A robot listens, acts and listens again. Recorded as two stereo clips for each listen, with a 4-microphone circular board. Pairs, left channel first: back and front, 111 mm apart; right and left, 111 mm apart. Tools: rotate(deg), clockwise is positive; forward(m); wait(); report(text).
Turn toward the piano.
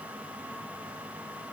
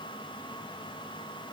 wait()
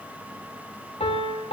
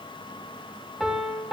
rotate(-175)
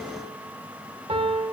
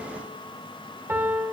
rotate(-20)
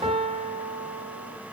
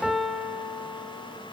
report("Found it: a piano, straight ahead, 1 to 2 m away.")